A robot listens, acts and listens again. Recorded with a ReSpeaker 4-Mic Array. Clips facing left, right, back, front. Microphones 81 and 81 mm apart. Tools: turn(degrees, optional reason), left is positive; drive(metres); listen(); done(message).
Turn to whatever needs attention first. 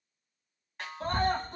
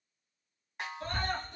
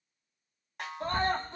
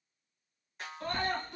turn(degrees=130, reason="The scream: 130° left.")
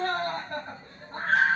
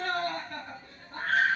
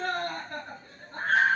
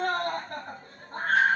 turn(degrees=30, reason="The scream is now 30° left.")
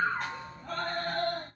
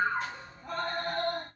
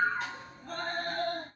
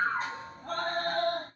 turn(degrees=-15, reason="The scream is now 15° right.")
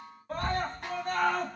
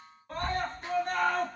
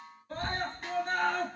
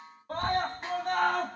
done("Found it: a scream, straight ahead, 1 to 2 m away.")